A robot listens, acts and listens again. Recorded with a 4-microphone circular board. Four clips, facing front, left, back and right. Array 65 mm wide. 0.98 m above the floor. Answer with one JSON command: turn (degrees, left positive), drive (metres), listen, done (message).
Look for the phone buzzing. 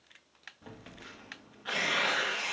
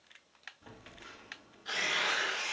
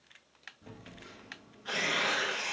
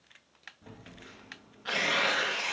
{"done": "Found it: a phone buzzing, straight ahead."}